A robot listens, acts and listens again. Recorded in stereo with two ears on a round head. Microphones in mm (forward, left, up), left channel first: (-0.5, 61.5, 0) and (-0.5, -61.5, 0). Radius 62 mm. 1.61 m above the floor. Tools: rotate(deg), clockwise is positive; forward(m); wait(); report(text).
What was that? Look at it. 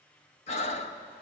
rotate(-50)
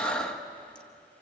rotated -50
rotate(-10)
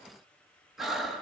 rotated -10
report("Facing the breathing.")